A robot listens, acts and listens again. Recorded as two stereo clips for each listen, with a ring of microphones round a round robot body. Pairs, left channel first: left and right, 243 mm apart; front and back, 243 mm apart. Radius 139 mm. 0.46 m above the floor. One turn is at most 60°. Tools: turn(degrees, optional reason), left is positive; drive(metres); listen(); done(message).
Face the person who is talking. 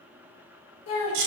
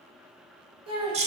turn(degrees=60, reason="The child speaking: 110° left.")
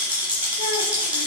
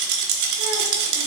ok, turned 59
turn(degrees=50, reason="Nothing new. It was at 50° left.")
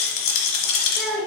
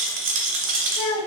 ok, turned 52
done("Facing the child speaking, 1 to 2 m away.")